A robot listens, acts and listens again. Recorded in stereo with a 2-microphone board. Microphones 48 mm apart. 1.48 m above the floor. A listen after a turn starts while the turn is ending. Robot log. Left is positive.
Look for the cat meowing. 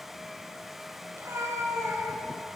note: The cat meowing: about 70° right or 110° right.
cmd yaw -70
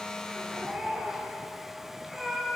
end: Found it: a cat meowing, straight ahead.